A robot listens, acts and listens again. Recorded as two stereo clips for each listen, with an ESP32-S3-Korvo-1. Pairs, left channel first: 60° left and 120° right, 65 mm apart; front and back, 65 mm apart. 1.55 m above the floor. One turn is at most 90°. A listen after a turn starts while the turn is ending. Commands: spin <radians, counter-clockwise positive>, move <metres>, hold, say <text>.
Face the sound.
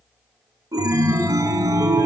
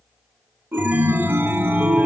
spin -1.57
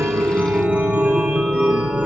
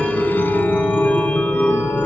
spin -0.96
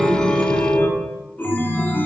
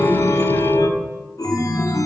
say Found it: a chime, straight ahead, 1 to 2 m away.